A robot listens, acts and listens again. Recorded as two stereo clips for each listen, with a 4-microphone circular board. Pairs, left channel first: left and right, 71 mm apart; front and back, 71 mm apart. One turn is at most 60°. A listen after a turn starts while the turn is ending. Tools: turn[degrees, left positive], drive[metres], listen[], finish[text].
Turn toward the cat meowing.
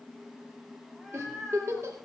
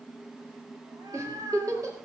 Thought: The cat meowing: straight behind.
Action: turn[60]
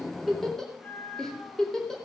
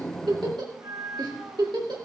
Thought: The cat meowing is now 150° left.
Action: turn[60]
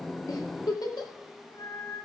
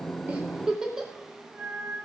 Thought: The cat meowing is now 105° left.
Action: turn[60]
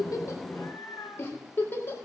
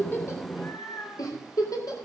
Thought: The cat meowing is now 40° left.
Action: turn[40]
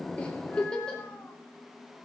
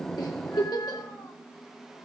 Action: listen[]
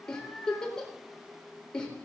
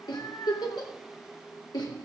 Thought: The cat meowing is now 20° left.
Action: turn[20]
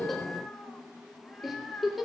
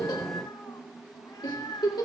Thought: The cat meowing is now 10° left.
Action: turn[10]
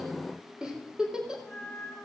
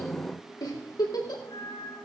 Action: finish[Found it: a cat meowing, straight ahead.]